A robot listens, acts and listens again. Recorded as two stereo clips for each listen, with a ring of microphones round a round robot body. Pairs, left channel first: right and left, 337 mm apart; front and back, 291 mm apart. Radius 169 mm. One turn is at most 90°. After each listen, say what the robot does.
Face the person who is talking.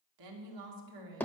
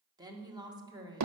Turn 90° left.
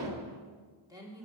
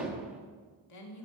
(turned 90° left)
Turn 10° left.
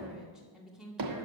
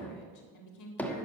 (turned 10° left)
Facing the woman speaking, 2 to 4 m away.